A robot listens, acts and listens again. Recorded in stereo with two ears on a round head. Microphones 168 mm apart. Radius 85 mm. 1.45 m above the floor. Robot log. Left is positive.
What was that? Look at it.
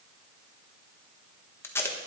cmd yaw +30
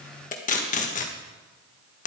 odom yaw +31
note: So it is at 135° left.
cmd yaw +135
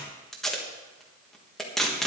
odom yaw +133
end: Found it: tape being pulled, straight ahead, 1 to 2 m away.